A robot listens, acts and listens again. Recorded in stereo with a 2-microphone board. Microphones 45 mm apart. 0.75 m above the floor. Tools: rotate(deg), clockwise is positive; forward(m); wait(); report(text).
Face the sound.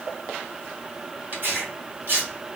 rotate(45)
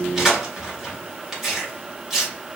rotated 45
report("Facing the tearing paper, 1 to 2 m away.")